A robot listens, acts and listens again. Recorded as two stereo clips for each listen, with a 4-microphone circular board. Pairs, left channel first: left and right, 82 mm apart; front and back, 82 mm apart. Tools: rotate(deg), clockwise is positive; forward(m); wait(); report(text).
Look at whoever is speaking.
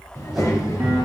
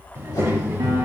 rotate(-130)
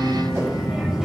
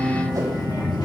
rotate(10)
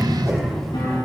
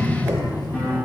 report("Facing the child speaking, 1 to 2 m away.")